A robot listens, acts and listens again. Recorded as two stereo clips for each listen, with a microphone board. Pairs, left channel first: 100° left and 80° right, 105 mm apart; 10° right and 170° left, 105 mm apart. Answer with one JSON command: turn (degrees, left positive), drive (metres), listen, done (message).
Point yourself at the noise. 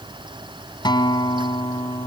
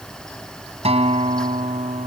{"turn": 150}
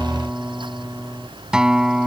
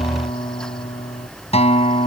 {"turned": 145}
{"done": "Facing the guitar."}